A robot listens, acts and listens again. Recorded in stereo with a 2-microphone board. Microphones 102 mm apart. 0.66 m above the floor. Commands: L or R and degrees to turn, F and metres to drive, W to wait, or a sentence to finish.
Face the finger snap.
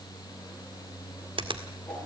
R60
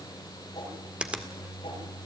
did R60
R10
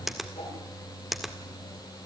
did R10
Found it: a finger snap, straight ahead.